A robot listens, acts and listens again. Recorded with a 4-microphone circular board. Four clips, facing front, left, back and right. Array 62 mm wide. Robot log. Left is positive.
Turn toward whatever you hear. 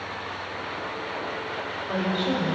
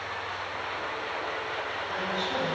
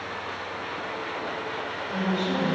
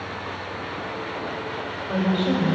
note: The woman speaking: 40° right.
cmd yaw -40
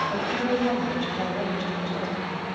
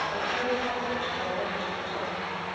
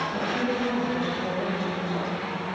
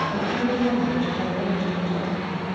note: The woman speaking is now 10° left.
cmd yaw +10
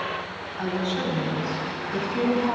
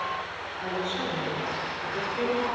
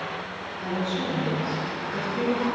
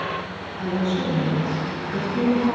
end: Found it: a woman speaking, straight ahead, over 4 m away.